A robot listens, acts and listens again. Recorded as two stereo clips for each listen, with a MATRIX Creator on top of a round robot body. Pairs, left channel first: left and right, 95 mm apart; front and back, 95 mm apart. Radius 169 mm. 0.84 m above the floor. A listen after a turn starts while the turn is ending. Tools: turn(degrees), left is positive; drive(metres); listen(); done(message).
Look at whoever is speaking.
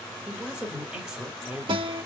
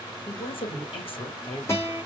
turn(degrees=-10)
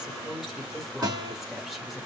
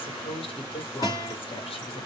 done("Facing the woman speaking, 1 to 2 m away.")